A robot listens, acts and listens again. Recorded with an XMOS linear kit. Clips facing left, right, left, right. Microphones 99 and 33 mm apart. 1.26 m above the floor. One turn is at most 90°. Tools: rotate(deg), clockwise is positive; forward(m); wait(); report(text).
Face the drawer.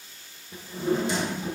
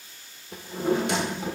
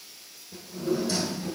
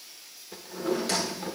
rotate(65)
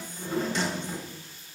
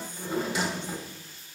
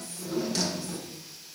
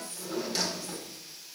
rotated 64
rotate(10)
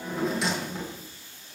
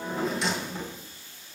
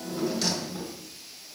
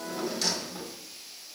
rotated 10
report("Found it: a drawer, straight ahead.")